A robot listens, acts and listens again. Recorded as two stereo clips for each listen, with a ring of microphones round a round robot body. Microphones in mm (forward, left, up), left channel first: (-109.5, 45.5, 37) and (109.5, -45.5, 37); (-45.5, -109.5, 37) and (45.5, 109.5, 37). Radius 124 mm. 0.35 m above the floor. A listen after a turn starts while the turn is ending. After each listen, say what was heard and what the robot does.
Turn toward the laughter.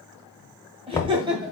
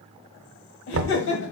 The laughter: 95° right. Turn 95° right.
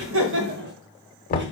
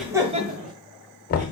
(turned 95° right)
The laughter is now 15° left. Turn 15° left.
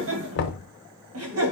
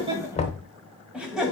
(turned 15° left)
The laughter is now 20° right. Turn 20° right.
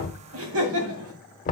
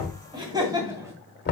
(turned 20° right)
The laughter is now 10° right. Turn 10° right.
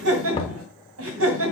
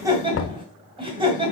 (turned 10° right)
Found it: laughter, straight ahead, 2 to 4 m away.